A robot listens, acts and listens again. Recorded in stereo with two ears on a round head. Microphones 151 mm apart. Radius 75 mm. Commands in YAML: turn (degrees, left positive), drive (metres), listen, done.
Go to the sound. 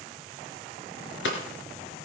turn: 90
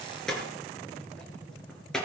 drive: 1.0
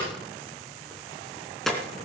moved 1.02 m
drive: 1.0
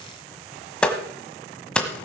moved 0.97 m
drive: 1.0
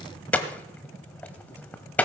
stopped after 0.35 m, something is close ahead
turn: 10
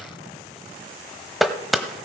done: "I am next to the hammering."